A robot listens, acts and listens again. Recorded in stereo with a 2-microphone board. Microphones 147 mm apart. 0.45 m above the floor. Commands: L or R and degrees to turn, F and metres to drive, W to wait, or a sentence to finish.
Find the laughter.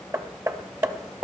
W
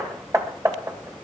W
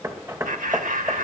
R70
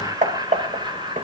R30
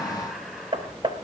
W
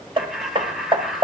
Facing the laughter, 2 to 4 m away.